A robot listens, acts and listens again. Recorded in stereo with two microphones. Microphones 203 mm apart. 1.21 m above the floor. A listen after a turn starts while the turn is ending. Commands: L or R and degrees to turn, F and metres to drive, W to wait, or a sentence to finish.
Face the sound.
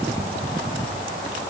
W
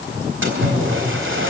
R70
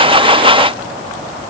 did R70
W
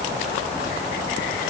I heard a splash, but can't make it out now. It was about straight ahead or 40° right.